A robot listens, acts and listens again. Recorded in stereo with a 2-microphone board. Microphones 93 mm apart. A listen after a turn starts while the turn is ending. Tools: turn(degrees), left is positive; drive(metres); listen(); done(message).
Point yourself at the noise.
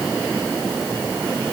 listen()
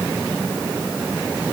listen()
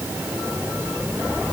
done("I can't make out anything to turn to.")